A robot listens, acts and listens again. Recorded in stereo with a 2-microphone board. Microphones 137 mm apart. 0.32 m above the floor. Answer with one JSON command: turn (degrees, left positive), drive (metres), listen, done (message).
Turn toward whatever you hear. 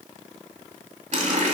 {"turn": -60}
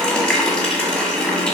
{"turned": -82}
{"done": "Facing the running tap, 1 to 2 m away."}